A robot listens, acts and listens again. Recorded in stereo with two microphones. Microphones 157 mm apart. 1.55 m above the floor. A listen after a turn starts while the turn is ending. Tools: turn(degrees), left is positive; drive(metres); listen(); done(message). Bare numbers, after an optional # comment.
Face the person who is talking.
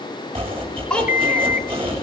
turn(30)
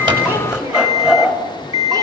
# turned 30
listen()
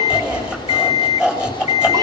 listen()
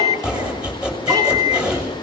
done("I heard a child speaking, but can't make it out now. It was about 25° right or 145° left.")